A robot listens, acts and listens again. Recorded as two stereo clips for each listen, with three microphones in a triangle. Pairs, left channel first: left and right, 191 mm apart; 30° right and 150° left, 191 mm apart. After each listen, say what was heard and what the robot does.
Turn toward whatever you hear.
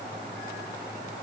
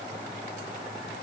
Keep listening.
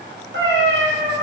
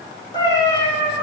The cat meowing: 115° right. Turn 115° right.
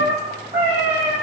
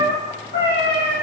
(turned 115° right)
The cat meowing is now 35° right. Turn 35° right.
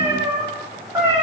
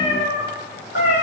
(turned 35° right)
The cat meowing is now 10° right. Turn 10° right.
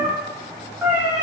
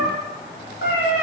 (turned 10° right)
Facing the cat meowing, 2 to 4 m away.